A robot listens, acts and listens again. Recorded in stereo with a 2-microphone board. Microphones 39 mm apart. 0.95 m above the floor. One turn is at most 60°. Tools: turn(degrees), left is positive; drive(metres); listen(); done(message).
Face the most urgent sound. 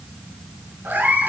listen()
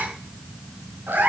listen()
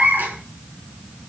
done("I can't make out anything urgent to turn to.")